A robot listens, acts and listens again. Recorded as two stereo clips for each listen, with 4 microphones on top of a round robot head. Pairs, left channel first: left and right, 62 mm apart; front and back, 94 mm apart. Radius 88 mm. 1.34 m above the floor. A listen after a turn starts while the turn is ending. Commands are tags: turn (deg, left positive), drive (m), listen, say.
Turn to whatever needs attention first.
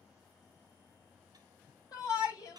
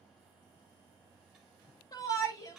<turn deg="45"/>
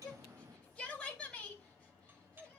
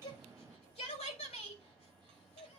<say>Facing the shout.</say>